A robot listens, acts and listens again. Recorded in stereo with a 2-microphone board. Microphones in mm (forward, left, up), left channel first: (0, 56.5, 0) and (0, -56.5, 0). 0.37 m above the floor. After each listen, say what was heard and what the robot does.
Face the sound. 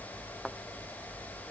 Turn 30° left.
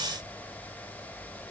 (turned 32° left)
Keep listening.
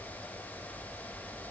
I heard a thud, but can't make it out now. It was about 30° right or 145° left.